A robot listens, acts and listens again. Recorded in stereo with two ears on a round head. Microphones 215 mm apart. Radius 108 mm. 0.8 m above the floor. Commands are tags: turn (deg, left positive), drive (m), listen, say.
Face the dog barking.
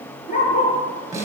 <turn deg="35"/>
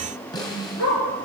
<turn deg="120"/>
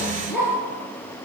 <say>Facing the dog barking.</say>